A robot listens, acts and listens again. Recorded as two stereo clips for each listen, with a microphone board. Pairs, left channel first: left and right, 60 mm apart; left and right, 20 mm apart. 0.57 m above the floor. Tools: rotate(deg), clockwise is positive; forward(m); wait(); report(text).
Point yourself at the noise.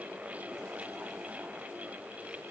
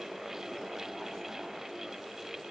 wait()
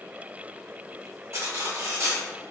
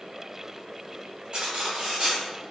rotate(50)
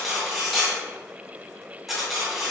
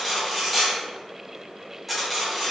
report("Found it: cutlery clinking, straight ahead.")